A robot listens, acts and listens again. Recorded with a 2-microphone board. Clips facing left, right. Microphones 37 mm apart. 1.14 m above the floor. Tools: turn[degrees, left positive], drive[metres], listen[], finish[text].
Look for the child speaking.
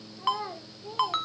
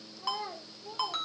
Thought: The child speaking: about 35° left or 145° left.
Action: turn[35]
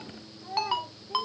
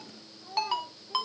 Thought: So it is at 95° left.
Action: turn[95]
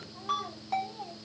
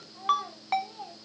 Action: finish[Facing the child speaking.]